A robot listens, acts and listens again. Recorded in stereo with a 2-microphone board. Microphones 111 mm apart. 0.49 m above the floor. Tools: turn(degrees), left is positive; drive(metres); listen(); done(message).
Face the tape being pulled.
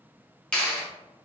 listen()
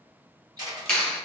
listen()
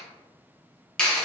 done("I can't make out tape being pulled to turn to.")